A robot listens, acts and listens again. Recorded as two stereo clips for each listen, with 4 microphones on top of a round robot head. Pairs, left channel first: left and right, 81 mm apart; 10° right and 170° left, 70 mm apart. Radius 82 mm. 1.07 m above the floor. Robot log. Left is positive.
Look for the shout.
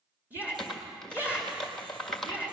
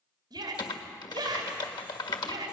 note: The shout: 160° right.
cmd yaw -160
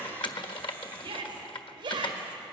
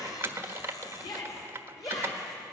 note: The shout is now 50° right.
cmd yaw -50
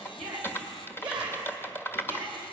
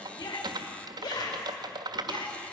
note: The shout is now 10° right.
cmd yaw -10
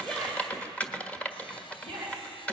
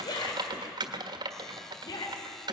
end: Found it: a shout, straight ahead, 2 to 4 m away.